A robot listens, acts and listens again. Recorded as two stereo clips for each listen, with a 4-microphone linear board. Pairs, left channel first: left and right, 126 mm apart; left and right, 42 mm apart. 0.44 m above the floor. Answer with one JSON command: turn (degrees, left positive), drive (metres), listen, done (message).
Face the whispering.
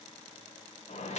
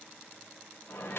{"listen": true}
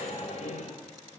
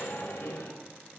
{"listen": true}
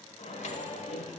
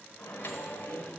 {"done": "I can't make out whispering to turn to."}